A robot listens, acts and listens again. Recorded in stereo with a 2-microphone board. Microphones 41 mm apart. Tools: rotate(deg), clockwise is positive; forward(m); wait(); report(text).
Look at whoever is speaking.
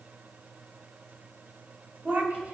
rotate(55)
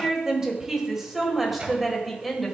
report("Facing the woman speaking.")